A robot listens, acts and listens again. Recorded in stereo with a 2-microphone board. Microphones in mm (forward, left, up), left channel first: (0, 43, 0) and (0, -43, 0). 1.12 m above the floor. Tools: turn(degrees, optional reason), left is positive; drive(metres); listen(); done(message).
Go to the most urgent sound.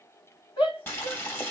turn(degrees=90)
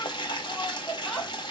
drive(metres=1.0)
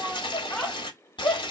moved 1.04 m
turn(degrees=15, reason="The shout is now 15° left.")
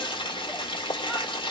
listen()
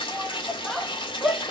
drive(metres=1.0)
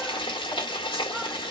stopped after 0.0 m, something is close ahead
listen()
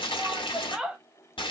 done("Arrived at the shout, straight ahead.")